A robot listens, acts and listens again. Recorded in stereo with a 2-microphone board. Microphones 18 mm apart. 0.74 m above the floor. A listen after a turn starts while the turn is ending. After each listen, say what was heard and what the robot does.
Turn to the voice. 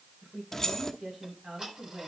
The woman speaking: about 65° right or 115° right. Turn 65° right.
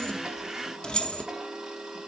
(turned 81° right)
Keep listening.
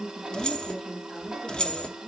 Facing the woman speaking.